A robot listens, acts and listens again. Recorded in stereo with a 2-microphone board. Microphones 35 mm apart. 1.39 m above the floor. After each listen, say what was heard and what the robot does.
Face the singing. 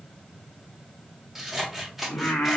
The singing: about 70° left or 110° left. Turn 70° left.
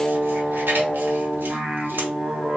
So it is at 45° right. Turn 45° right.
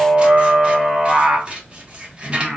The singing is now 20° right. Turn 20° right.
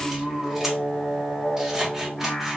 Found it: singing, straight ahead, 1 to 2 m away.